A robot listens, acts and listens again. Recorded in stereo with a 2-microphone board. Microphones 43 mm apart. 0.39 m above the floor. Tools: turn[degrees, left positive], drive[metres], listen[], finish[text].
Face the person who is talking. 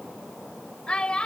Thought: The child speaking: about 25° left or 155° left.
Action: turn[25]
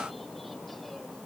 Action: listen[]
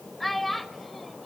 Action: finish[Found it: a child speaking, straight ahead, under 1 m away.]